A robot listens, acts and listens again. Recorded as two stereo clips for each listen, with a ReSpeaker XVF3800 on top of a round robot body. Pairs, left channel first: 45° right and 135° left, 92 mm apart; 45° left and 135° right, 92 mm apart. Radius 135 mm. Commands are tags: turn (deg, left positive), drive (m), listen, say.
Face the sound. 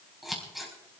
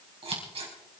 <turn deg="-135"/>
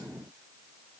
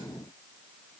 <listen/>
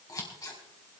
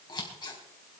<say>Facing the scissors, 2 to 4 m away.</say>